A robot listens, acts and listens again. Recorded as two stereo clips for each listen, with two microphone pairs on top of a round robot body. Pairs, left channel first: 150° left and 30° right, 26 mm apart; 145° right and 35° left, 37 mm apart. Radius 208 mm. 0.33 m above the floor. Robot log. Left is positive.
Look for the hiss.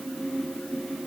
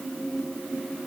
cmd idle
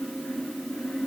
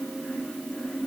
cmd idle
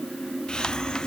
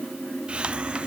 note: The hiss: 90° left.
cmd yaw +90
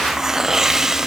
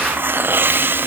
note: The hiss is now 40° left.
cmd yaw +40
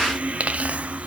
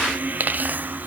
end: Facing the hiss.